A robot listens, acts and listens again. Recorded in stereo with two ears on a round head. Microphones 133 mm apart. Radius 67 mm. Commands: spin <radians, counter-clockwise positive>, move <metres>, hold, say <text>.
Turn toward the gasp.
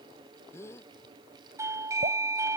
spin 0.35
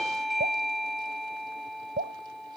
hold
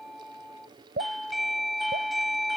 say I heard a gasp, but can't make it out now. It was about straight ahead or 140° left.